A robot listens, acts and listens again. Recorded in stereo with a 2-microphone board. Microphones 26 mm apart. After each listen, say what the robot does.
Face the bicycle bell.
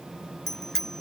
Turn 30° left.
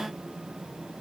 Keep listening.
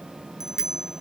Turn 20° right.
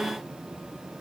Keep listening.
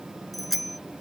Facing the bicycle bell.